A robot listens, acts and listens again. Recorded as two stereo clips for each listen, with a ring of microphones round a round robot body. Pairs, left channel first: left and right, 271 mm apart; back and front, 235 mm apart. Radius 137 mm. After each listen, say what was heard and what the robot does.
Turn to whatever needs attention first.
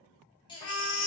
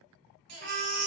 The baby crying: 15° left. Turn 15° left.
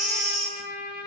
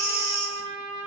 Found it: a baby crying, straight ahead, 1 to 2 m away.